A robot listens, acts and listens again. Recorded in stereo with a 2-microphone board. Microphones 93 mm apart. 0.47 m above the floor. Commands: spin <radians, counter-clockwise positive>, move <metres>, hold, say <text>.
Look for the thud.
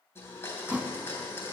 spin -0.35
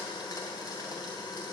hold
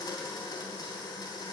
say I heard a thud, but can't make it out now. It was about straight ahead or 140° right.